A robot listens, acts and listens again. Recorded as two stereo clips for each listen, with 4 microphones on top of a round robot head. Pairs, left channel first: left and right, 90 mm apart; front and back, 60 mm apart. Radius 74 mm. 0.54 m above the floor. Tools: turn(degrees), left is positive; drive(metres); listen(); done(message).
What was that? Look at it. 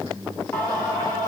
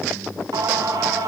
turn(degrees=160)
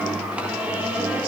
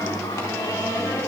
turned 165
turn(degrees=-15)
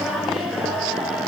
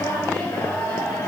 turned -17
done("Facing the singing.")